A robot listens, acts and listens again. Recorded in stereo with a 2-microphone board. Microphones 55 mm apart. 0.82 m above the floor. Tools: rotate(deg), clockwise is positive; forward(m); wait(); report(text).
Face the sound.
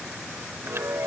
rotate(50)
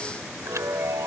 rotate(75)
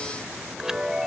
rotate(10)
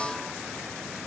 wait()
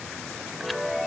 report("Found it: a chime, straight ahead.")